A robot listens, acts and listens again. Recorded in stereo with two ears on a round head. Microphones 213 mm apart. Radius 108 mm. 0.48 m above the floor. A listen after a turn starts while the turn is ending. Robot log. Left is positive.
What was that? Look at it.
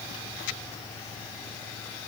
cmd idle
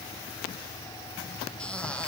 cmd yaw +30
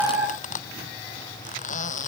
note: So it is at 145° left.
cmd yaw +145
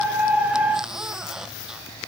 end: Found it: a squeak, straight ahead.